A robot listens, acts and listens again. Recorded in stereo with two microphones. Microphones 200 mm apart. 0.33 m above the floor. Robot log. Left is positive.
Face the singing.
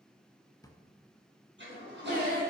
note: The singing: about 55° right or 125° right.
cmd yaw -55
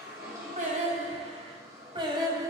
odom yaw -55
note: So it is at 20° right.
cmd yaw -20
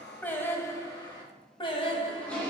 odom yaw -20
note: The singing is now 25° left.
cmd yaw +25
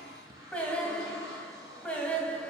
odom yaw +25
end: Found it: singing, straight ahead, 1 to 2 m away.